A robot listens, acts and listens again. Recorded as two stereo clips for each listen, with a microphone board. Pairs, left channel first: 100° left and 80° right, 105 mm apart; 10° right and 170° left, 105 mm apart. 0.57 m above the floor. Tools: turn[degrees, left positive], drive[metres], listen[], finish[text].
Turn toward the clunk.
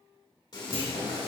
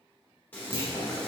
Thought: The clunk: 55° right.
Action: turn[-55]
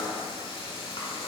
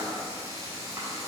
Action: finish[I heard a clunk from this way, but can't make it out now.]